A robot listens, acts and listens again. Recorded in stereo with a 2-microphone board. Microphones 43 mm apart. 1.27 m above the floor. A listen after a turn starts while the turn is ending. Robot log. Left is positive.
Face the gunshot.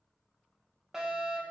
cmd idle
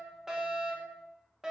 cmd idle
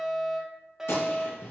note: The gunshot: about 75° left or 105° left.
cmd yaw +75
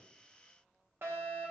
cmd idle
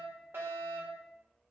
end: I heard a gunshot, but can't make it out now. It was about straight ahead or 30° left.